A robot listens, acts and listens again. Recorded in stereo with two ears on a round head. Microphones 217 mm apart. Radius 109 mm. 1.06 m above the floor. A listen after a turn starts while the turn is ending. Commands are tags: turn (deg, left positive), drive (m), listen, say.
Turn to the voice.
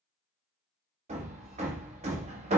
<listen/>
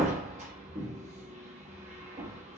<listen/>
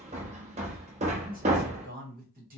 <turn deg="-35"/>
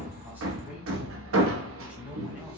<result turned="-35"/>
<listen/>
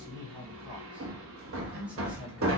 <say>Facing the man speaking, 1 to 2 m away.</say>